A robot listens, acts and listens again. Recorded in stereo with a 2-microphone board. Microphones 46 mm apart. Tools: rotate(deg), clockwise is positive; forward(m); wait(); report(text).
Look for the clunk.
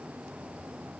wait()
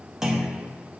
rotate(30)
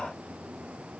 wait()
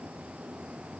report("I heard a clunk, but can't make it out now. It was about 20° left or 140° right.")